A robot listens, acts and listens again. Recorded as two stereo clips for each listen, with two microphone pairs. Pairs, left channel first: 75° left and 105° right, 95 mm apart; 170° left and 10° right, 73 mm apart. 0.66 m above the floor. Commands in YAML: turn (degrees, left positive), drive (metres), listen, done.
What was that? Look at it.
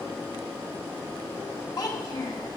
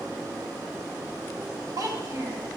turn: 25
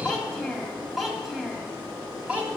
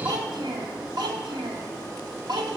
turn: -30
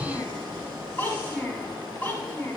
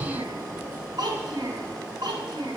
done: "Found it: a child speaking, straight ahead."